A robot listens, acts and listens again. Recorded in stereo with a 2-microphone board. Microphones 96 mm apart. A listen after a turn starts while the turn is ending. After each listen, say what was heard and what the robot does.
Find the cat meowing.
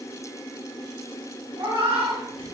The cat meowing: about 65° right or 115° right. Turn 65° right.
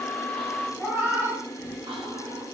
So it is at 25° right. Turn 25° right.
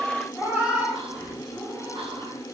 The cat meowing is now 20° right. Turn 20° right.
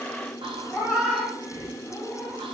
Found it: a cat meowing, straight ahead, 1 to 2 m away.